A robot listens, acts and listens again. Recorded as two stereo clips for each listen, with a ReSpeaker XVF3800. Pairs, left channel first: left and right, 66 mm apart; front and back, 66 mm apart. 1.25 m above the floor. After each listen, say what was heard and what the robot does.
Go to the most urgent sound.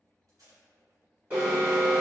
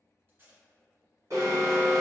The alarm: 155° right. Turn 155° right.
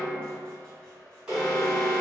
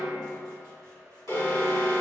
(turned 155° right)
The alarm is now 15° right. Turn 15° right.
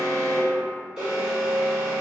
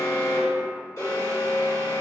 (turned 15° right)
Drive 1.0 m forward.
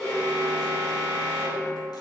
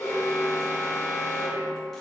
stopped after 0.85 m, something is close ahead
I am next to the alarm.